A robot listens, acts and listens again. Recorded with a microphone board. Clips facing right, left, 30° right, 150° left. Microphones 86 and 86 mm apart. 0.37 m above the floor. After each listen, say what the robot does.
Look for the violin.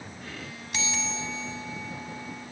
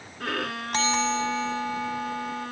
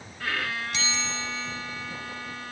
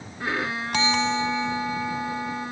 Turn 80° left.
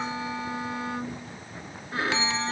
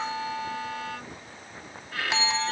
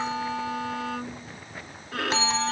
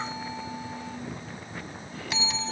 Turn 25° right.
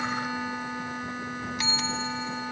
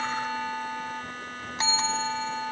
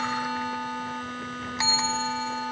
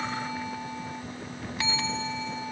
Turn 10° right.
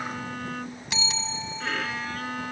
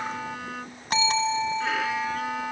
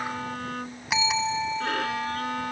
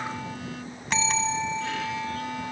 Found it: a violin, straight ahead.